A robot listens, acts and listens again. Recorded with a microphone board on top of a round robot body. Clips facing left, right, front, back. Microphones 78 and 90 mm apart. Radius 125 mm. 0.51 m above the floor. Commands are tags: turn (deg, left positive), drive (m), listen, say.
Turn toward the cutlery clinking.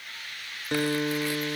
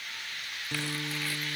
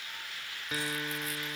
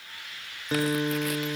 <listen/>
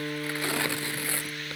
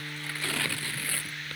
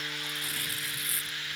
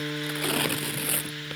<listen/>
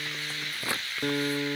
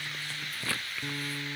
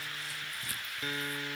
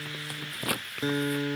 <say>I can't make out cutlery clinking, only a guitar and tearing paper.</say>